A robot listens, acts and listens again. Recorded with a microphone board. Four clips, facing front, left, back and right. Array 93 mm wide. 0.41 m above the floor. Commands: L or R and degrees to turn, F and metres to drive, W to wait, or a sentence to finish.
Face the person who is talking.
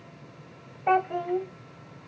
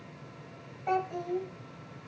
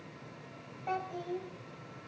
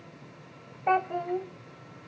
R35
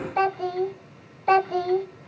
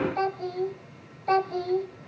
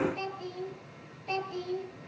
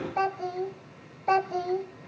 R15
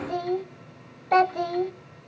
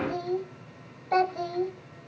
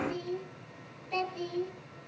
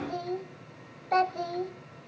Facing the child speaking.